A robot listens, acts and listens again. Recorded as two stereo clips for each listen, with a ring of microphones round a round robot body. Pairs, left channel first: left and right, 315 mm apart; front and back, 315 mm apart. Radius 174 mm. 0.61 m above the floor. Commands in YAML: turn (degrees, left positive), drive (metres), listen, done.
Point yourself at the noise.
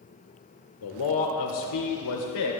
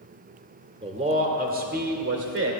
turn: 130
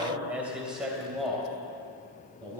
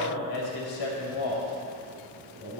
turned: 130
done: "Found it: a man speaking, straight ahead."